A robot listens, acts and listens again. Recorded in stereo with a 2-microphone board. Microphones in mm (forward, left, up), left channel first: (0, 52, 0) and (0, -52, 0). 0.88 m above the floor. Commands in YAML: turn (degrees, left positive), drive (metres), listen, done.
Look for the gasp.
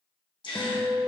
turn: 50
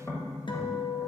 listen: true
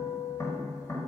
done: "I heard a gasp, but can't make it out now. It was about straight ahead or 80° left."